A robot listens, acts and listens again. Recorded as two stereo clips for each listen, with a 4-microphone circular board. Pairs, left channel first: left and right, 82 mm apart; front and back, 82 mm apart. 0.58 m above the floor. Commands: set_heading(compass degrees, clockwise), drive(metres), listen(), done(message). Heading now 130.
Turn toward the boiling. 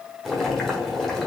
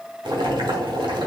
set_heading(315)
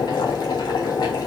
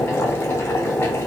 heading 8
set_heading(313)
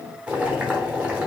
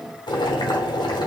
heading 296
set_heading(311)
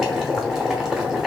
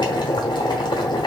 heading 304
done("Facing the boiling.")